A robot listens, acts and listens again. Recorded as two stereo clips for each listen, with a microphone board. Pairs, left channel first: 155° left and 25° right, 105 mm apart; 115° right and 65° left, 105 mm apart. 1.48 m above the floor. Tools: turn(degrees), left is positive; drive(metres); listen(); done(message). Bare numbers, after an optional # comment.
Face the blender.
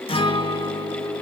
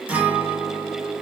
listen()
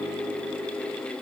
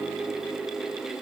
listen()
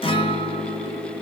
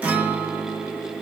done("I can't make out a blender to turn to.")